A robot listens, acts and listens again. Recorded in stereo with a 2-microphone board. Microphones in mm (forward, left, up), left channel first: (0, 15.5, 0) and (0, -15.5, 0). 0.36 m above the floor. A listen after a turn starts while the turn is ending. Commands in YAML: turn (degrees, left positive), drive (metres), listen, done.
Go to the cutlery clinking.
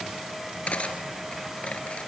turn: 40
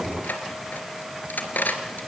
turn: 95
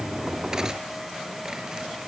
listen: true
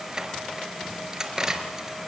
turn: -20
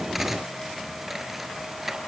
drive: 1.0
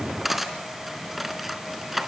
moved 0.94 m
drive: 1.0
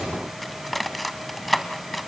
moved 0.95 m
drive: 1.0
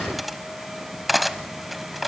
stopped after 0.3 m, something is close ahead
done: "I am next to the cutlery clinking."